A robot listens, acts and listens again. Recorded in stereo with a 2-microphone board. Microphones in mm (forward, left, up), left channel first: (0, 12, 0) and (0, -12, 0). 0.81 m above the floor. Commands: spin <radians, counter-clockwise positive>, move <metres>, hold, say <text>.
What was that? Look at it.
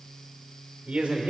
spin -1.22
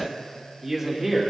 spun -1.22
spin -0.26
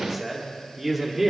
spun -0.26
spin -0.26
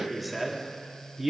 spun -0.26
spin -0.26
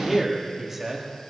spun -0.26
spin -0.35
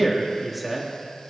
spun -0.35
say Found it: a man speaking, straight ahead, 1 to 2 m away.